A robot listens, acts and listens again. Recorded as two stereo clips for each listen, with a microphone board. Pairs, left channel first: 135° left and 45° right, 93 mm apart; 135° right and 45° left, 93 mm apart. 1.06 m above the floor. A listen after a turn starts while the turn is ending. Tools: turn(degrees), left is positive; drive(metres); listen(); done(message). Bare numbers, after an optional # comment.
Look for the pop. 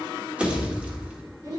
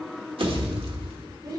# The pop: 30° left.
turn(30)
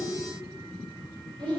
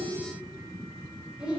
done("Facing where the pop came from. I can't hear it now.")